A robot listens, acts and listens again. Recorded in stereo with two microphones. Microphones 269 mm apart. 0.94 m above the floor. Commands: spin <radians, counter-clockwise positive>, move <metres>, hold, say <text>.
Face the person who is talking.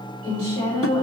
spin -0.96
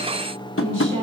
spin -1.22
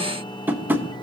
hold
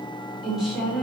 say Found it: a woman speaking, straight ahead.